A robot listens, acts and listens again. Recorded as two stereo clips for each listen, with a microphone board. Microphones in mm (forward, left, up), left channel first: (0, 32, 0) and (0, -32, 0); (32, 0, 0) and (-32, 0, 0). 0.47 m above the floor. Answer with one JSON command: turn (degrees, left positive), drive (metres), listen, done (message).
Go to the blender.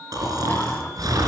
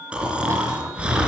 {"listen": true}
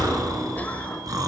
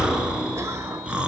{"listen": true}
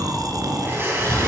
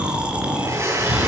{"turn": -140}
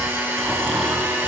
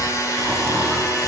{"turn": -25}
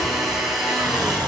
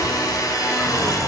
{"drive": 1.0}
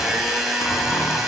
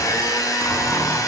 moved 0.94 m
{"drive": 1.0}
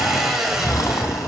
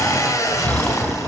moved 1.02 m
{"turn": -10}
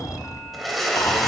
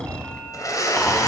{"drive": 1.0}
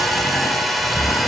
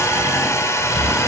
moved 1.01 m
{"drive": 1.0}
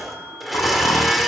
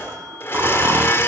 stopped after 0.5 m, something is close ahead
{"done": "Arrived at the blender, straight ahead."}